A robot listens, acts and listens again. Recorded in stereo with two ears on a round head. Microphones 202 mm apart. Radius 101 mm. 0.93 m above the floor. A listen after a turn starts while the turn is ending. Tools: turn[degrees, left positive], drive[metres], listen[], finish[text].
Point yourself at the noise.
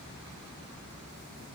Action: listen[]
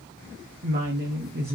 Thought: The woman speaking: about 40° right or 140° right.
Action: turn[-40]
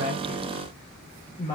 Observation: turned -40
Thought: So it is at 25° left.
Action: turn[25]
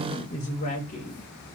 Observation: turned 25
Thought: The woman speaking is now 35° left.
Action: turn[35]
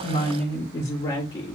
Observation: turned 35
Thought: The woman speaking is now 25° left.
Action: turn[25]
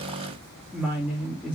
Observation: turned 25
Action: finish[Facing the woman speaking, 1 to 2 m away.]